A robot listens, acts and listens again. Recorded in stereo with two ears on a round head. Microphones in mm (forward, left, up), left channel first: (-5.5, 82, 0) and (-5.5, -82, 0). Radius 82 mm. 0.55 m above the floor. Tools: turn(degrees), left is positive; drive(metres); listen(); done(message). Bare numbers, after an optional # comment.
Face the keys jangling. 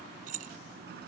# The keys jangling: about 45° right or 135° right.
turn(-45)
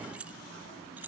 # So it is at 10° right.
turn(-10)
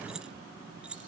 done("Found it: keys jangling, straight ahead.")